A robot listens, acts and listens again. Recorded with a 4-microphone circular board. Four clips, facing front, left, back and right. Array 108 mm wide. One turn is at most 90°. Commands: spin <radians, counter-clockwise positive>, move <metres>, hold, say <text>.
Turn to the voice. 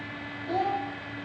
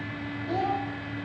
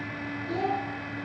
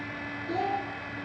spin 0.96
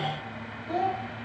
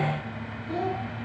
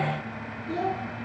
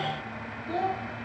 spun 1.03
say Facing the child speaking, 1 to 2 m away.